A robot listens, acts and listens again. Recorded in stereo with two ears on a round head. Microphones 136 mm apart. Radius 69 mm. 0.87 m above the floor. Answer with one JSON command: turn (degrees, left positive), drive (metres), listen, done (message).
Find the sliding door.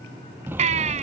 {"turn": -30}
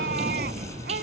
{"turn": -135}
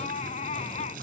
{"listen": true}
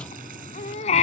{"listen": true}
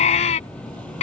{"turn": 10}
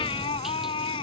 {"listen": true}
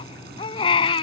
{"listen": true}
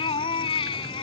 {"done": "Facing where the sliding door came from. I can't hear it now."}